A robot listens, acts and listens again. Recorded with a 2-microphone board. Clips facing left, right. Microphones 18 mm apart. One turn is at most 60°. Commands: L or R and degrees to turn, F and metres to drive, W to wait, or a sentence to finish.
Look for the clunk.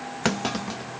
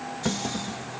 L60
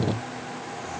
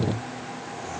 L30
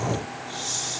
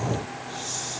Facing where the clunk came from. I can't hear it now.